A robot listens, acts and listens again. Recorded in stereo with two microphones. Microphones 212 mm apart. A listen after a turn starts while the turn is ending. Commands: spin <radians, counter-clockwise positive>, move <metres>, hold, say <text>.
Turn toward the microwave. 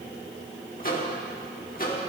spin 0.79
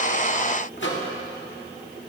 spin 1.48
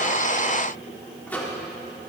spin 0.17
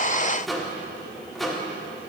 say Facing the microwave.